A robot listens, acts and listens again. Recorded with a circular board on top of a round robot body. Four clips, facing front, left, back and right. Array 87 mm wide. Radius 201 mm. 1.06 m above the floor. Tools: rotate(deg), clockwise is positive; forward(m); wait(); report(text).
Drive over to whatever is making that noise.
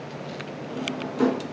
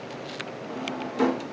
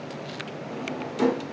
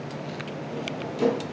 rotate(-115)
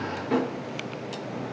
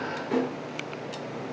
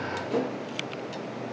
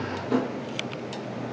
rotate(-15)
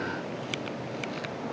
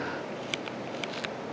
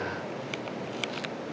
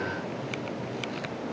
wait()
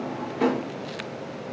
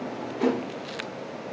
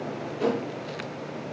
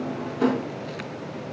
forward(1.0)
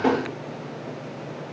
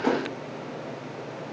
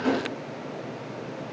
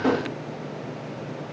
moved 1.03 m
forward(1.0)
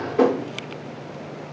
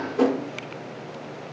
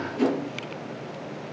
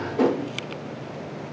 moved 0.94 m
rotate(-10)
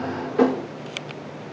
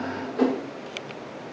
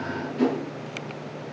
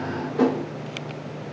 forward(1.0)
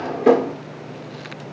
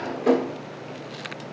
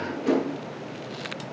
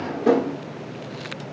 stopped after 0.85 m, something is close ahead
report("Arrived at the drawer, straight ahead.")